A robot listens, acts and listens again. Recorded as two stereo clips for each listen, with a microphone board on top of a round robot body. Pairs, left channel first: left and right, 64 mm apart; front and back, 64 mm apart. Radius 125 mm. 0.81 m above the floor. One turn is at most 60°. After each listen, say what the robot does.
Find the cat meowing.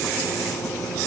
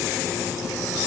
Keep listening.
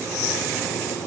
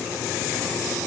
Keep listening.
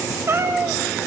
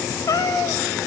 Turn 35° right.
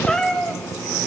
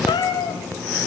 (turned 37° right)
Turn 15° left.
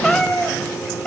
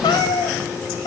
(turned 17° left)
Turn 15° left.
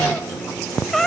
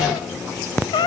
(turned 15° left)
Found it: a cat meowing, straight ahead, 2 to 4 m away.